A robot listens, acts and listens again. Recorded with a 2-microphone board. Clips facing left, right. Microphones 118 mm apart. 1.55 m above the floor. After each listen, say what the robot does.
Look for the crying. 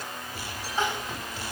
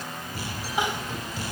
Turn 30° right.
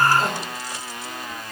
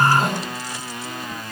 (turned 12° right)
Facing the crying.